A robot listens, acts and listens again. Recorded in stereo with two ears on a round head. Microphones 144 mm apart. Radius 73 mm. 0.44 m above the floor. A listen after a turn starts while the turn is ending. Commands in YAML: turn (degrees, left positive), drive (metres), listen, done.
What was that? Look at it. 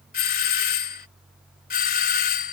turn: 60
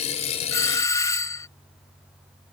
turn: 20
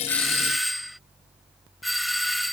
done: "Found it: a doorbell, straight ahead."